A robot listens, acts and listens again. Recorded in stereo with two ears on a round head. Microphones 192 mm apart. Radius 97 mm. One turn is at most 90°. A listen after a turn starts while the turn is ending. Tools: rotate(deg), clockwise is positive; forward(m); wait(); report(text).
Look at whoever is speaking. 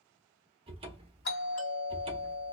wait()
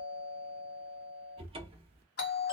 wait()
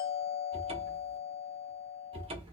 report("I can't make out anyone speaking to turn to.")